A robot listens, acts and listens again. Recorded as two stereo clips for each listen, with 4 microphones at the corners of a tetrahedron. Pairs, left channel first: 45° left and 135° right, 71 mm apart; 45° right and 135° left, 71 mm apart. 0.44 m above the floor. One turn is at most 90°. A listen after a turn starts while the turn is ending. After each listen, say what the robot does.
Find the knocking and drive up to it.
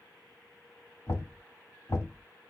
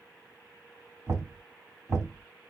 Turn 90° left.
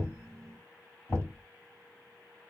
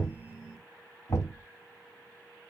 Turn 25° right.
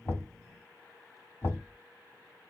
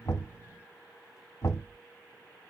Drive 1.0 m forward.
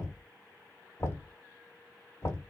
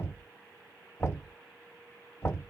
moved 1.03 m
Drive 1.0 m forward.
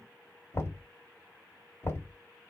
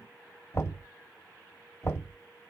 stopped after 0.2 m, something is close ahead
I am next to the knocking.